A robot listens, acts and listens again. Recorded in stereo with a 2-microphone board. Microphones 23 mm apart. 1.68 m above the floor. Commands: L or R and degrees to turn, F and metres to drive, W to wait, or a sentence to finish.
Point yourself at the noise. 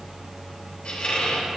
L55
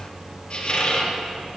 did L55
L60
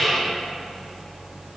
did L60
R10
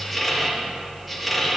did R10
Facing the squeak.